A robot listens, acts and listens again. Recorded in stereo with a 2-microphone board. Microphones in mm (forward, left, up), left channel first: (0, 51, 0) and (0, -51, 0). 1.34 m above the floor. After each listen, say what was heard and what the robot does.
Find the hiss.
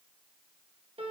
Keep listening.
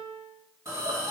The hiss: about 30° right or 150° right. Turn 30° right.
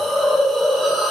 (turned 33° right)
Facing the hiss, 1 to 2 m away.